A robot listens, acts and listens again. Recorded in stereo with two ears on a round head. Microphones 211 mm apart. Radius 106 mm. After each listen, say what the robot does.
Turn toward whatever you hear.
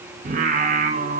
Turn 30° right.
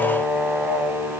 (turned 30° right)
Found it: singing, straight ahead, 2 to 4 m away.